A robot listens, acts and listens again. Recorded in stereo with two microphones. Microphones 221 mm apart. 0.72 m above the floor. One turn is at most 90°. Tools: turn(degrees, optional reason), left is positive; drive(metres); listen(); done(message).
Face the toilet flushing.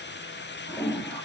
turn(degrees=-30)
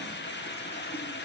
listen()
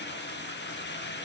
listen()
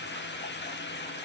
done("I heard a toilet flushing, but can't make it out now. It was about 25° left or 145° right.")